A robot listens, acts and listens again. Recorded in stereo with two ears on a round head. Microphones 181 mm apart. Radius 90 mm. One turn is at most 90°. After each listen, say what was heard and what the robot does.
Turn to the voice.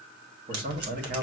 The man speaking: about 50° right or 130° right. Turn 50° right.
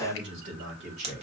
So it is at 55° right. Turn 55° right.
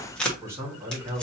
The man speaking is now 10° right. Turn 10° right.
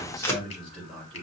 Facing the man speaking, 2 to 4 m away.